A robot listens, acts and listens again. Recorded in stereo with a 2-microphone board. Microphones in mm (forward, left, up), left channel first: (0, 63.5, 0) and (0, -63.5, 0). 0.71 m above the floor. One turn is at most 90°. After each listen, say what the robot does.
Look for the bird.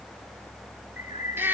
Turn 90° left.
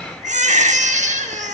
Keep listening.
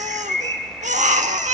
Turn 15° left.
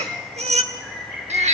Facing the bird, 1 to 2 m away.